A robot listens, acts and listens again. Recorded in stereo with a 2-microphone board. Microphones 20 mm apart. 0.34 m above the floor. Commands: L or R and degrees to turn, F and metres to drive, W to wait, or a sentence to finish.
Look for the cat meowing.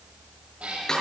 R90
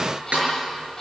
W
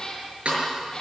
L30
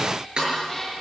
W
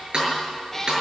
L15
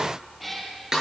Facing the cat meowing, over 4 m away.